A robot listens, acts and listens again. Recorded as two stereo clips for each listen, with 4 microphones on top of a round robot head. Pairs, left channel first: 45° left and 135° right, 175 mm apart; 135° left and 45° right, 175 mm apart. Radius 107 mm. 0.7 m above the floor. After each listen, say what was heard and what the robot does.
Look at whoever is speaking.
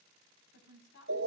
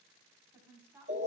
The woman speaking: 30° left. Turn 30° left.
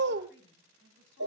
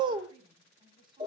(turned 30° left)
The woman speaking is now 20° left. Turn 20° left.
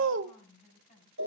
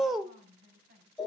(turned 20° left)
Found it: a woman speaking, straight ahead, over 4 m away.